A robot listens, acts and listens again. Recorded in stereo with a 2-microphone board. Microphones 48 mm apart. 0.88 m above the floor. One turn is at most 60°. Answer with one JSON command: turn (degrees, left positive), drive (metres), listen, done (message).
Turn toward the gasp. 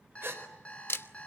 {"turn": -55}
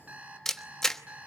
{"listen": true}
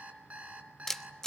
{"done": "I heard a gasp, but can't make it out now. It was about straight ahead or 70° right."}